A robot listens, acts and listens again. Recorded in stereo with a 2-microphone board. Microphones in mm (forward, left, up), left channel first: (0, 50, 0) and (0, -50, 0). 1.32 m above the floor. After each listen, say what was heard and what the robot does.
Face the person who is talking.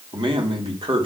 The man speaking: about 50° right or 130° right. Turn 50° right.
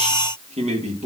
So it is at 85° right. Turn 85° right.
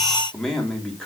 Found it: a man speaking, straight ahead.